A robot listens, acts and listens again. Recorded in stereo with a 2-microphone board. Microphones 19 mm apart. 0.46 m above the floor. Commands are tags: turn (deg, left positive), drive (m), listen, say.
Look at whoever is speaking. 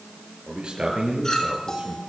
<turn deg="-60"/>
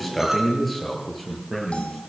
<say>Found it: a man speaking, straight ahead.</say>